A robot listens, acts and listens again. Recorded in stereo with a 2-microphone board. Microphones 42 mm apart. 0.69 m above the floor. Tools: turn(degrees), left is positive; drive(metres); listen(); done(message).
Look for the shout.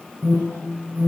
listen()
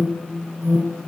listen()
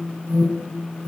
done("I can't make out a shout to turn to.")